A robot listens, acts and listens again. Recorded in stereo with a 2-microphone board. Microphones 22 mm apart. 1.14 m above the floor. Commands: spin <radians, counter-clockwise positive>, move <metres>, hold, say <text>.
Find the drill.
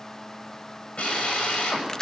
spin 1.57
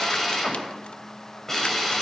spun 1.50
spin 0.26
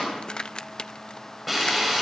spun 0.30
say Facing the drill.